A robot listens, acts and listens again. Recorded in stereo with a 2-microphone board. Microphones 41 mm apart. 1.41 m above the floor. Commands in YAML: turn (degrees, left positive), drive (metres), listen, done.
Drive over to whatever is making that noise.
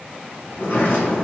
turn: 65
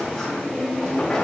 turn: 10
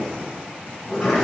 drive: 1.0
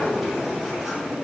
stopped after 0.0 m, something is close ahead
turn: -10
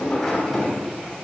done: "Blocked. The sliding door is further on, straight ahead."